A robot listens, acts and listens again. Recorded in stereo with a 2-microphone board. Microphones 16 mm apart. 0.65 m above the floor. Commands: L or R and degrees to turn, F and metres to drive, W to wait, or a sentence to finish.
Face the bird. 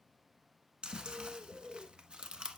R25
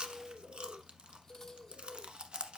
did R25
R130
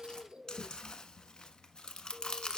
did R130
Found it: a bird, straight ahead, under 1 m away.